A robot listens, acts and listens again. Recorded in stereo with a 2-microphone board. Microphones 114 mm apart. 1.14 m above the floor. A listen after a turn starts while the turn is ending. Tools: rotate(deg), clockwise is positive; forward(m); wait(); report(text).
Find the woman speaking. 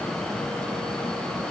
wait()
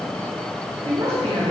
rotate(60)
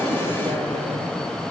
wait()
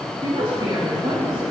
rotate(35)
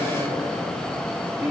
wait()
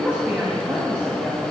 rotate(15)
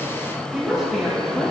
report("Facing the woman speaking.")